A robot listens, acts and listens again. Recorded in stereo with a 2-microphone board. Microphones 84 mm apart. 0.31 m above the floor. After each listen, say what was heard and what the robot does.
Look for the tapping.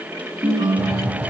The tapping: about 50° right or 130° right. Turn 50° right.
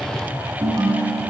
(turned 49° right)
Facing the tapping.